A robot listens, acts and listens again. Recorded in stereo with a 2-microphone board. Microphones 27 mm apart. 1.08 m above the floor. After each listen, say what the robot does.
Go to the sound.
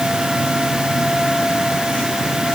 Keep listening.
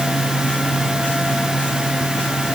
Keep listening.
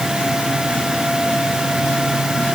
I can't make out anything to turn to.